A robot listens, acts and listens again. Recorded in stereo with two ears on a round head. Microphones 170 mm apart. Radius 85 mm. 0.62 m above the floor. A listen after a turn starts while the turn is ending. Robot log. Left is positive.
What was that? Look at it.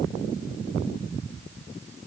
cmd idle
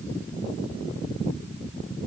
cmd idle
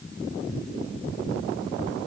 end: I can't make out anything to turn to.